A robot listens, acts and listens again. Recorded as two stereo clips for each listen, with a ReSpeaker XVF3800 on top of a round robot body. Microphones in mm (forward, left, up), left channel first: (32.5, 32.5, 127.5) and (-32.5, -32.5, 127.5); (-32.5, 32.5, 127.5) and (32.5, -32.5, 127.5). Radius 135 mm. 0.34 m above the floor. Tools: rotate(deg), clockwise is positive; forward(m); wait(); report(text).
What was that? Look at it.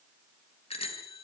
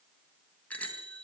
rotate(-60)
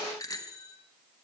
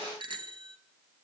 rotate(10)
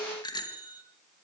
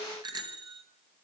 report("Facing the bicycle bell.")